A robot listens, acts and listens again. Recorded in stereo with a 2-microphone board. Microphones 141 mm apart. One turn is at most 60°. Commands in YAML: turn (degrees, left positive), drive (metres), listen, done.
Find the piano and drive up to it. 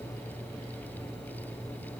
listen: true
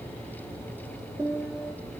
turn: -15
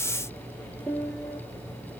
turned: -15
drive: 1.0
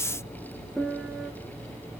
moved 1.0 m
drive: 1.0
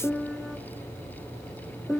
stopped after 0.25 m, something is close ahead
done: "I am next to the piano."